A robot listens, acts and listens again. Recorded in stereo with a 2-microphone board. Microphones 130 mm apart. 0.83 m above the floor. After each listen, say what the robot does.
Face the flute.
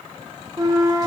Turn 25° right.
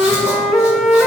Found it: a flute, straight ahead, under 1 m away.